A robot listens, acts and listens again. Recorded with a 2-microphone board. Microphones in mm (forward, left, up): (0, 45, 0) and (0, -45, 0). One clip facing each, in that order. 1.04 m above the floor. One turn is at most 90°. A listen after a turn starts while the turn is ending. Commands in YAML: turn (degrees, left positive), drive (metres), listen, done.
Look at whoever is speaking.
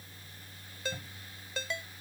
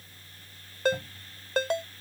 listen: true
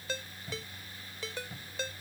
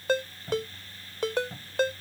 listen: true
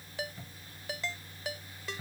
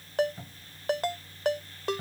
done: "I can't make out anyone speaking, only a cupboard door and a ringtone."